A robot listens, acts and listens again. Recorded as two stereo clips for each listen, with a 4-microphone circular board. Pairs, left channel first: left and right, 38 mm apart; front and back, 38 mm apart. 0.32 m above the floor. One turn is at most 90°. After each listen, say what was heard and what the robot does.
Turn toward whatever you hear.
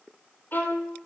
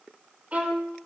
The violin: 125° left. Turn 90° left.
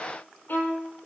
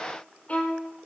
The violin is now 55° left. Turn 55° left.
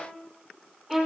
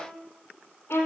Found it: a violin, straight ahead.